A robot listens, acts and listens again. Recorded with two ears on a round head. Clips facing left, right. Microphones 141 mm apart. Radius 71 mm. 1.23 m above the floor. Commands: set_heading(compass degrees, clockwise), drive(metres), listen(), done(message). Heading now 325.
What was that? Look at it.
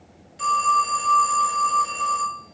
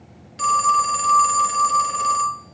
set_heading(35)
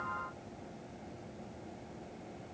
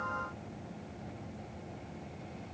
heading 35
listen()
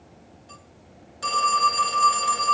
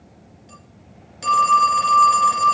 set_heading(55)
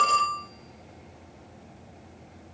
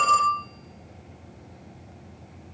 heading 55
done("Found it: a phone ringing, straight ahead, 1 to 2 m away.")